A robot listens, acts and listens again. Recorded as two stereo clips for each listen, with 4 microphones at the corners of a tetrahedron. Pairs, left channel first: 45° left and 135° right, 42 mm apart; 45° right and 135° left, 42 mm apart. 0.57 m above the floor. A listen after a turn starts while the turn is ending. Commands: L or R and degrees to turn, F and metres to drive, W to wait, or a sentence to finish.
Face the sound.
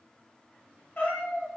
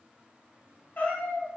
L10
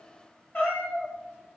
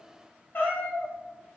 Facing the cat meowing, 1 to 2 m away.